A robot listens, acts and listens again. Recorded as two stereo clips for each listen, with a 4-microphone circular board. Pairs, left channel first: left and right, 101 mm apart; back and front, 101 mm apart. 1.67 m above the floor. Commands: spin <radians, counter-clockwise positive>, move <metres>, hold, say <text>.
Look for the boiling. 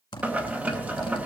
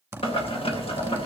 spin -2.88
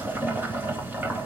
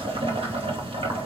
spin -0.35
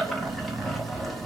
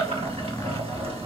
say Found it: boiling, straight ahead.